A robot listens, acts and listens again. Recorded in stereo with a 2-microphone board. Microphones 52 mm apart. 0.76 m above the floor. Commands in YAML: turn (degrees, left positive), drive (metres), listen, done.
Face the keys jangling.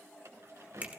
turn: -65
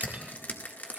listen: true
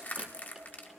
listen: true
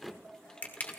turn: 20
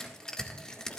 listen: true
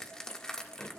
listen: true
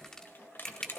turn: 45
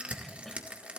listen: true
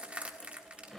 done: "Facing the keys jangling."